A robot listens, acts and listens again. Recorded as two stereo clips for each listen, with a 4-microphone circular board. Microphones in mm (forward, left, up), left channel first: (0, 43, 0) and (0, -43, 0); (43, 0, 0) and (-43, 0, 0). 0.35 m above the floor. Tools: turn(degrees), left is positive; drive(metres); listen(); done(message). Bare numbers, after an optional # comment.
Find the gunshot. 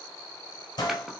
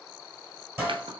# The gunshot: 120° left.
turn(120)
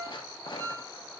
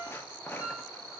done("Facing where the gunshot came from. I can't hear it now.")